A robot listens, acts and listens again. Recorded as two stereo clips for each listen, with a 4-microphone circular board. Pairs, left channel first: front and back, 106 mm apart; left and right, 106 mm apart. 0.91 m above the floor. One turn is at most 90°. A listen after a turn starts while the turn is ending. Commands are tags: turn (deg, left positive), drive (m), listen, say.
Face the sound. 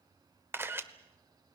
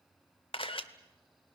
<turn deg="90"/>
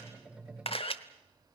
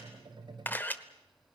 <turn deg="20"/>
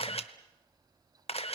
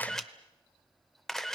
<say>Found it: a camera shutter, straight ahead.</say>